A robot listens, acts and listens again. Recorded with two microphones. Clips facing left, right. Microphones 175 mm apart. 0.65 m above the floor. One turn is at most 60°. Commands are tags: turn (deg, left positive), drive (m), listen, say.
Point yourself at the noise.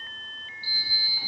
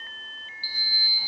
<turn deg="60"/>
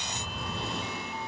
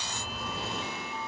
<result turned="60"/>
<say>Facing the sliding door.</say>